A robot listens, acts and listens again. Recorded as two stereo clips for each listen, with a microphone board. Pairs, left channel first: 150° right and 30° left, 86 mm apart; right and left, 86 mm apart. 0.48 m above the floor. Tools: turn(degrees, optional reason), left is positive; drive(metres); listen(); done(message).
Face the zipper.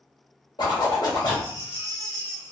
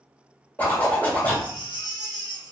turn(degrees=-155, reason="The zipper: 155° right.")
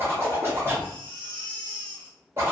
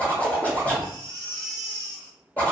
turn(degrees=-20, reason="The zipper is now 20° right.")
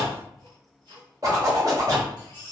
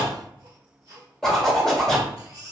done("Facing the zipper, 1 to 2 m away.")